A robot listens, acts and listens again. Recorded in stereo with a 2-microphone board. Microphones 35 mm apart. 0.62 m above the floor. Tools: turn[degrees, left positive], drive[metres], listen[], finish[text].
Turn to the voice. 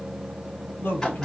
Thought: The man speaking: about 60° left or 120° left.
Action: turn[60]
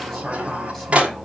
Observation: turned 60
Action: listen[]
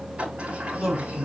Action: finish[Facing the man speaking.]